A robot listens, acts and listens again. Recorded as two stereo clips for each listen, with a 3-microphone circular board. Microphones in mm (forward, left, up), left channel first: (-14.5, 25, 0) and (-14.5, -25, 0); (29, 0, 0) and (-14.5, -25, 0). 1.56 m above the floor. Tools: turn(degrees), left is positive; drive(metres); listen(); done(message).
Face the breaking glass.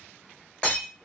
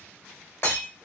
turn(degrees=25)
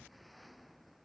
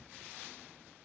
done("I heard breaking glass from this way, but can't make it out now.")